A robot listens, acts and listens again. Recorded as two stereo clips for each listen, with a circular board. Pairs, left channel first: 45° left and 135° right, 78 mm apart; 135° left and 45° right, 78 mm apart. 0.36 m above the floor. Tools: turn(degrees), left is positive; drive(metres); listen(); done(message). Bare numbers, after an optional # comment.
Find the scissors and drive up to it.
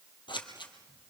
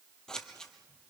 # The scissors: 55° left.
turn(55)
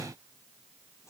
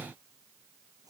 listen()
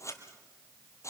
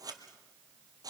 drive(1.0)
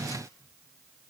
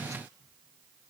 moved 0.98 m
listen()
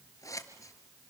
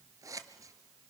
drive(1.0)
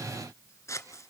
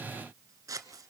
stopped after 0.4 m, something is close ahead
done("Arrived at the scissors, straight ahead.")